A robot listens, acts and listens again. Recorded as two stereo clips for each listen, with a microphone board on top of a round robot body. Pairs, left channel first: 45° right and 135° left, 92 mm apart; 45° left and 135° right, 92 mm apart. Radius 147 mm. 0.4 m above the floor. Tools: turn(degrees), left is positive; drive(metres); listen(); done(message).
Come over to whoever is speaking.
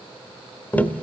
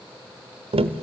listen()
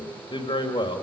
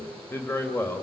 turn(degrees=-20)
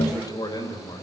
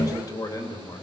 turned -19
drive(metres=1.0)
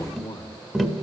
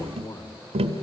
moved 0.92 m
drive(metres=1.0)
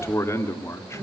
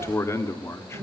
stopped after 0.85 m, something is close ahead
done("Arrived at the man speaking, straight ahead.")